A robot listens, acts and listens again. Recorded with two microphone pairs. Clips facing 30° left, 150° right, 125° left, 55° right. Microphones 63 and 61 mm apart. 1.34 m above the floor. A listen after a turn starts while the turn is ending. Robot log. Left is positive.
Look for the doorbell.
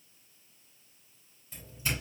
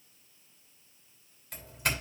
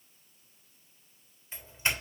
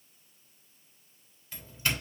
note: The doorbell: 165° right.
cmd yaw -165
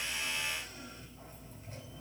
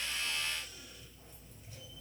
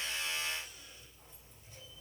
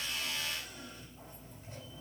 cmd idle
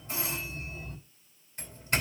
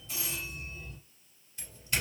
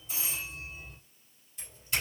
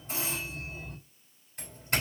note: The doorbell is now 15° right.
cmd yaw -15
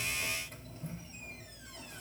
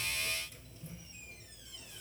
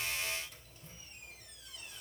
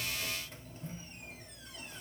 end: Found it: a doorbell, straight ahead.